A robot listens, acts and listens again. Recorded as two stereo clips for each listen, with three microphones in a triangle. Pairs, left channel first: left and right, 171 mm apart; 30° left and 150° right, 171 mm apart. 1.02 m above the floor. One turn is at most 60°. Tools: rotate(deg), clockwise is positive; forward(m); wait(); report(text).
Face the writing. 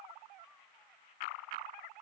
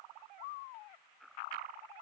wait()
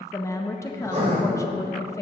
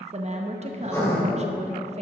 rotate(45)
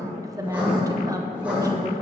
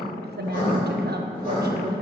rotate(10)
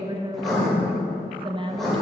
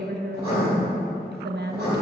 report("Found it: writing, straight ahead.")